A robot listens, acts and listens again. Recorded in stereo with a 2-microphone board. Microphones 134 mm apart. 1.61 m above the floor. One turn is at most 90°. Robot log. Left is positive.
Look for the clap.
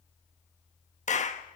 note: The clap: about 60° left or 120° left.
cmd yaw +60
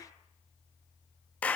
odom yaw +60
note: So it is at 10° left.
cmd yaw +10
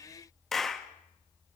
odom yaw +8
end: Found it: a clap, straight ahead, 1 to 2 m away.